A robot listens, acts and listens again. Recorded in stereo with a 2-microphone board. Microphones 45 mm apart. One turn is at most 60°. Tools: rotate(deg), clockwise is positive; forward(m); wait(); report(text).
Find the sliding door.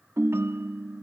wait()
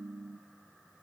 wait()
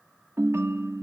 report("I can't make out a sliding door, only a ringtone.")